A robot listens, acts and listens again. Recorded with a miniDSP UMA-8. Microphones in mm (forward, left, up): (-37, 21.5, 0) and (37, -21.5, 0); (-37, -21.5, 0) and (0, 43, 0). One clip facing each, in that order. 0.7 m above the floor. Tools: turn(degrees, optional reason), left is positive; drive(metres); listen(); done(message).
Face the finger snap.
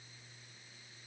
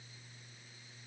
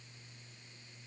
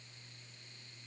listen()
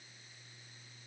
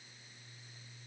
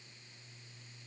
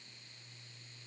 listen()
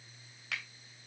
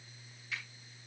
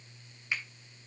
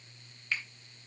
turn(degrees=170, reason="The finger snap: 170° left.")
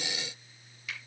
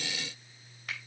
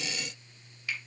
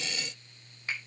turn(degrees=15, reason="The finger snap is now 15° left.")
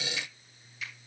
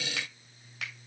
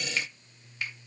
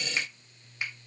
done("Facing the finger snap, 2 to 4 m away.")